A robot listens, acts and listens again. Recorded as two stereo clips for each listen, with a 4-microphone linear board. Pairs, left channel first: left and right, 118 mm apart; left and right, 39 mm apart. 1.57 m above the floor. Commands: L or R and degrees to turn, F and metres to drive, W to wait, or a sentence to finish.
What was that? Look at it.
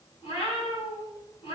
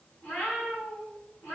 L45
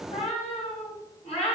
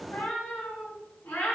L85
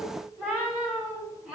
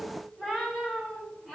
Found it: a cat meowing, straight ahead, 2 to 4 m away.